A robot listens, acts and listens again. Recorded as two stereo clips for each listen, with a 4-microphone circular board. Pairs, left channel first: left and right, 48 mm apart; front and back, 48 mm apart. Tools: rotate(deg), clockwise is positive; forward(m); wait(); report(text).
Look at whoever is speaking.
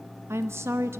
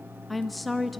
rotate(90)
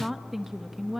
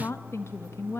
report("Facing the woman speaking.")